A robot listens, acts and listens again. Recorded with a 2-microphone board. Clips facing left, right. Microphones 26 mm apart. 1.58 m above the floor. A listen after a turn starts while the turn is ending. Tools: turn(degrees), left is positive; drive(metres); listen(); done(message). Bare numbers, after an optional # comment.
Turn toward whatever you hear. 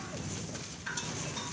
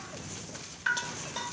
turn(-90)
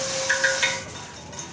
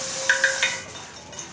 # So it is at 15° right.
turn(-15)
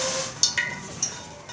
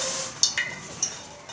done("Facing the dripping.")